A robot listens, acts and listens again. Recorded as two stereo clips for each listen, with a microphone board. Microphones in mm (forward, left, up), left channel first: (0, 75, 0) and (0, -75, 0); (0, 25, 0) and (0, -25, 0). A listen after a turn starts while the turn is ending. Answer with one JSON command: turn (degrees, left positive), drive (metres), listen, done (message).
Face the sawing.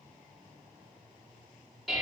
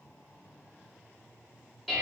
{"listen": true}
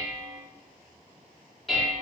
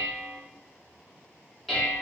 {"listen": true}
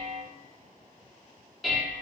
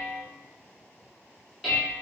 {"done": "I can't make out sawing, only dishes clattering."}